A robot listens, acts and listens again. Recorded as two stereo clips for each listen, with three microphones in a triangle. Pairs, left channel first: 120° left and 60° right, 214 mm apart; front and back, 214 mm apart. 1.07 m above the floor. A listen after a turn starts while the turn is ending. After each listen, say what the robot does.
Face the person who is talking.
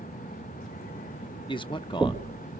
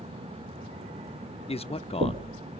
Turn 60° left.
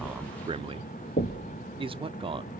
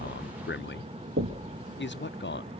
Facing the man speaking, under 1 m away.